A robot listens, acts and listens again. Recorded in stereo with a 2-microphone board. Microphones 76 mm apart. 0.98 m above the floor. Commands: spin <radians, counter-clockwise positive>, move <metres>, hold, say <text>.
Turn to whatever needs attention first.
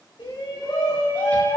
spin 1.57
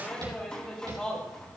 spin 0.17
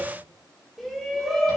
say Facing the shout, over 4 m away.